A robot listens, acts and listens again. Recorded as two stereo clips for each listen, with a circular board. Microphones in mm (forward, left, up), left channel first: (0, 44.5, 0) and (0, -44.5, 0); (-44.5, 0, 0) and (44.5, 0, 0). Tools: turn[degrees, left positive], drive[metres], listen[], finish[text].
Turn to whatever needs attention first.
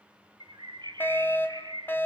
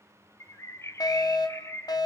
Thought: The fire alarm: 155° left.
Action: turn[155]
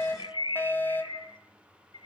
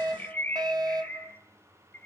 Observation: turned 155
Thought: The fire alarm is now 25° left.
Action: turn[25]
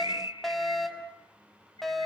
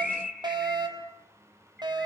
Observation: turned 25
Action: finish[Facing the fire alarm, over 4 m away.]